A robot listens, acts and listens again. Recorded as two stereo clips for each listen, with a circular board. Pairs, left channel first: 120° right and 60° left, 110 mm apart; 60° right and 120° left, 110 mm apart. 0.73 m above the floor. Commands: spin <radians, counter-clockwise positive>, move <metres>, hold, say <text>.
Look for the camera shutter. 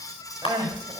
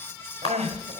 spin -1.48
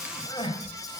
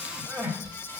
hold
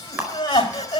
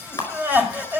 spin -0.17
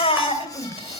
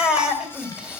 hold
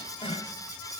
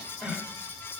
hold
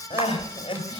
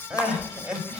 say Facing where the camera shutter came from. I can't hear it now.